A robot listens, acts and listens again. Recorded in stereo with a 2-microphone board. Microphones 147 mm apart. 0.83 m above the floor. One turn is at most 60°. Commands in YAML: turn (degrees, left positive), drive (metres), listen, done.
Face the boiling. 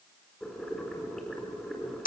turn: 30
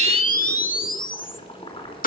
turn: 60
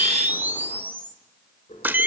turn: 55
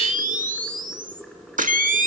done: "Facing the boiling."